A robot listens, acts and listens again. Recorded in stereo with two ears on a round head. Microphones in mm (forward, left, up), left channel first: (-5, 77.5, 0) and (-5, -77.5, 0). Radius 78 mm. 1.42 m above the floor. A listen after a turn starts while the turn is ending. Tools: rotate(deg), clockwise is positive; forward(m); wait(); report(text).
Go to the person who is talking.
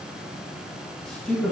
rotate(-30)
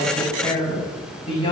rotate(-145)
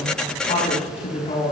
rotate(-40)
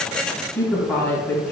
rotate(-15)
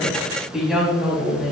forward(1.0)
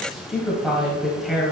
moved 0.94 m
forward(1.0)
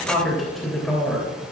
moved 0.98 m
forward(1.0)
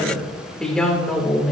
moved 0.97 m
forward(1.0)
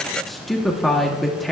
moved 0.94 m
forward(1.0)
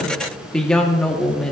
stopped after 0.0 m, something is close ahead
report("Arrived at the woman speaking, straight ahead.")